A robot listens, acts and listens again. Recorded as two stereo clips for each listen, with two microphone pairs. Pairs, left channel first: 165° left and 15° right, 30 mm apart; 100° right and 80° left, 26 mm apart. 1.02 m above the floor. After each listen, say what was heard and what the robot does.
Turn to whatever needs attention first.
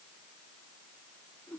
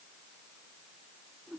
Keep listening.
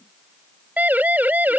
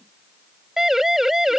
Facing the siren.